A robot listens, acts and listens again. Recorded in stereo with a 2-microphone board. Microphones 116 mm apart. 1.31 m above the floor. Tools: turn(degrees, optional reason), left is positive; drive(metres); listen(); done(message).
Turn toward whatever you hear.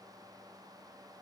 listen()
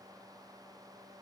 listen()
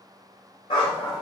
turn(degrees=45, reason="The dog barking: about 45° left or 135° left.")
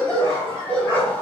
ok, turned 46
turn(degrees=15, reason="So it is at 15° left.")
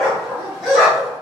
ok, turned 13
done("Facing the dog barking, 2 to 4 m away.")